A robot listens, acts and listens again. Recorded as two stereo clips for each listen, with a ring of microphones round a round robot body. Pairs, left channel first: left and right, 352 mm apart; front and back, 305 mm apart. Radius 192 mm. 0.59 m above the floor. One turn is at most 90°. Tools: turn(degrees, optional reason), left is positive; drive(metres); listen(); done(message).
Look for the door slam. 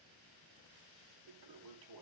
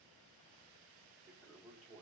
listen()
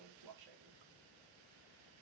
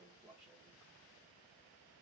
listen()
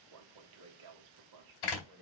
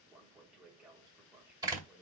turn(degrees=90, reason="The door slam: 100° left.")
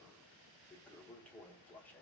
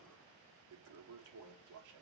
turn(degrees=10, reason="Nothing new. It was at 10° left.")
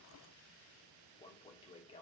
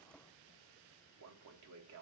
done("Facing where the door slam came from. I can't hear it now.")